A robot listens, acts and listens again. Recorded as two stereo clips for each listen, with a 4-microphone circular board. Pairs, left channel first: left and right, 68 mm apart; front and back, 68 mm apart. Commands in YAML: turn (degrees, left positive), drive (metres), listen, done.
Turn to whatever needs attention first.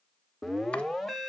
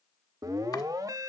turn: 180
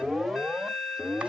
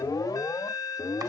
done: "Found it: an alarm, straight ahead."